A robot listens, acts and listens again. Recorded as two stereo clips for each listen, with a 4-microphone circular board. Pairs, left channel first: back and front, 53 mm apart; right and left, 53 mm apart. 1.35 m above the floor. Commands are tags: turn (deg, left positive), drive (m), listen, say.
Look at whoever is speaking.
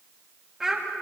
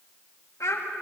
<turn deg="-80"/>
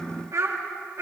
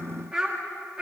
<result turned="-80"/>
<turn deg="20"/>
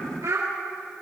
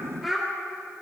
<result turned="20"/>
<say>Found it: a child speaking, straight ahead.</say>